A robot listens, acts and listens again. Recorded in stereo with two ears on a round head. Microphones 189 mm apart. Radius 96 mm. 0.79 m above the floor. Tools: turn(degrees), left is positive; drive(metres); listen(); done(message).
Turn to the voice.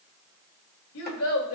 turn(degrees=90)
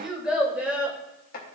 turn(degrees=-10)
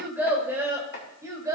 turn(degrees=-15)
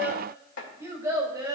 turn(degrees=-20)
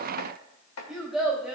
done("Facing the child speaking, 2 to 4 m away.")